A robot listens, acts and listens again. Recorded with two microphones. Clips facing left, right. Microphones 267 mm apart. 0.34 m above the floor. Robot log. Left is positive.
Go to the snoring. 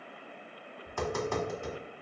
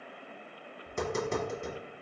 cmd idle
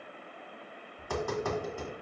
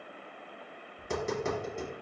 cmd idle
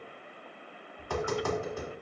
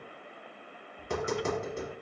end: I can't make out snoring, only tapping.